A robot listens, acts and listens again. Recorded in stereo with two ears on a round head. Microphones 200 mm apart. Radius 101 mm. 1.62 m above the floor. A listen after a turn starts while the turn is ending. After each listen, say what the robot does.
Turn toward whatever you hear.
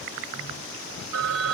Turn 90° right.
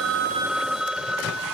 Facing the phone ringing.